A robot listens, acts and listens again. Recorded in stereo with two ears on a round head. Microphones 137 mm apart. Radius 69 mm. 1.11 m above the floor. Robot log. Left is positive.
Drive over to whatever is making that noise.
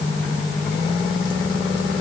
cmd idle
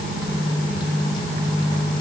cmd idle
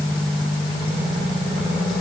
end: I can't make out anything.